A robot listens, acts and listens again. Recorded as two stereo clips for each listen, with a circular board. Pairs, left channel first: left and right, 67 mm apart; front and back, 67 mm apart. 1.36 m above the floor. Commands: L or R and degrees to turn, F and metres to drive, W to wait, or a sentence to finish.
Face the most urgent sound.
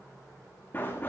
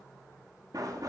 W
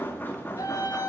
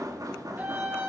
L115
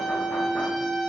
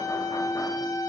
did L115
Found it: a scream, straight ahead.